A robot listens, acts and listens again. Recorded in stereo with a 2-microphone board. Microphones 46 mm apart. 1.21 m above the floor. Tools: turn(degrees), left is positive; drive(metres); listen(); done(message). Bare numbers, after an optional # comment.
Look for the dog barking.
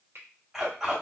turn(-30)
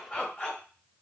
# So it is at 25° left.
turn(25)
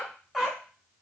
done("Facing the dog barking.")